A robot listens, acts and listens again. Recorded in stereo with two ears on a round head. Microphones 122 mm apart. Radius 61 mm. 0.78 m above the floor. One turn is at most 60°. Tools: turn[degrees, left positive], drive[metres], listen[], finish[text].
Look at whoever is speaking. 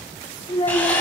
Thought: The child speaking: about 35° left or 145° left.
Action: turn[35]
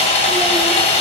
Action: listen[]
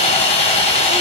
Action: listen[]
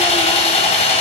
Action: finish[I heard a child speaking, but can't make it out now. It was about straight ahead or 110° left.]